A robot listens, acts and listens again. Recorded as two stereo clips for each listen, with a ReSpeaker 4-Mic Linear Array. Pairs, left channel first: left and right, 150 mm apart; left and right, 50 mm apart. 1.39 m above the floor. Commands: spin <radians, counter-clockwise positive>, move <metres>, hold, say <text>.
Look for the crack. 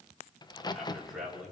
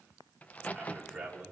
spin 0.52
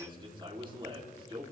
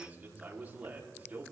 hold
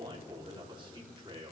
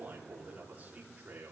say I heard a crack, but can't make it out now. It was about straight ahead or 120° left.